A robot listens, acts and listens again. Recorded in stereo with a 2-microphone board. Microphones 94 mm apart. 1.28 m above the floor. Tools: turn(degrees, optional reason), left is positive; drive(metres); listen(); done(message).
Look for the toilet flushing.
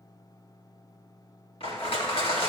listen()
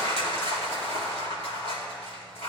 listen()
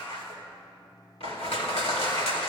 done("I can't make out a toilet flushing, only crushing.")